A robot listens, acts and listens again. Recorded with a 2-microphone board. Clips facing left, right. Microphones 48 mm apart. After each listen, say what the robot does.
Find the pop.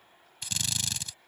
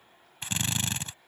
Keep listening.
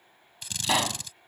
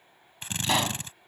Turn 30° left.
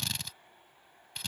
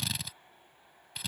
Keep listening.
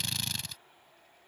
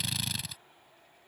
I heard a pop, but can't make it out now. It was about 25° right or 145° left.